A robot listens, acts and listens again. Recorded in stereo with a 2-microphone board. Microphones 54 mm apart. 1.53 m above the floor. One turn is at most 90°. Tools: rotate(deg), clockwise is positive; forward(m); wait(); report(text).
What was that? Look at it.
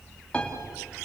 rotate(-15)
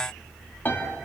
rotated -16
rotate(-90)
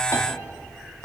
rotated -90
rotate(-60)
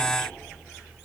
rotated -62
wait()
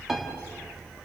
report("Facing the piano, 2 to 4 m away.")